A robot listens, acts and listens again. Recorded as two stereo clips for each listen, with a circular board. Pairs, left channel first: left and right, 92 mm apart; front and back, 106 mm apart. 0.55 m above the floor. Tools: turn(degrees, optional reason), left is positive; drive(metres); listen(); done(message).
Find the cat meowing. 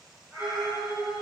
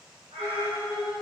turn(degrees=180, reason="The cat meowing: straight behind.")
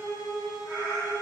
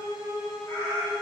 done("Facing the cat meowing, 1 to 2 m away.")